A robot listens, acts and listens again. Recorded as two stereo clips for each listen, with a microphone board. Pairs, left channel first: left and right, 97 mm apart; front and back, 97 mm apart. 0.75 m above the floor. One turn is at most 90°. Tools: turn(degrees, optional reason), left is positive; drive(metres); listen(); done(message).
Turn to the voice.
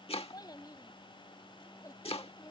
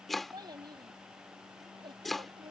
turn(degrees=90, reason="The child speaking: 145° left.")
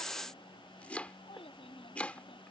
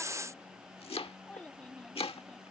turn(degrees=80, reason="The child speaking is now 80° left.")
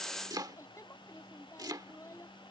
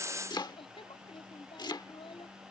turn(degrees=30, reason="The child speaking is now 30° left.")
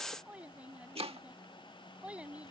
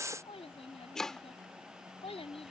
turn(degrees=-10, reason="The child speaking is now 10° right.")
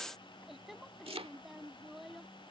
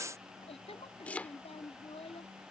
done("Facing the child speaking.")